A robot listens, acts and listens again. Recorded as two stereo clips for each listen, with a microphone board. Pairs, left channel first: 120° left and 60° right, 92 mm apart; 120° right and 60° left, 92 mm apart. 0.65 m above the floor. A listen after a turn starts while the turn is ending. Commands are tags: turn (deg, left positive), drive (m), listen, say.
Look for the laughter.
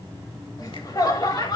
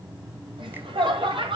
<turn deg="80"/>
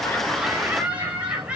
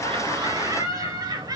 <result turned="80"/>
<turn deg="20"/>
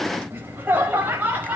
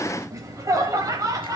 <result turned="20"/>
<turn deg="10"/>
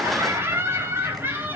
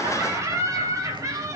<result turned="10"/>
<say>Found it: laughter, straight ahead, over 4 m away.</say>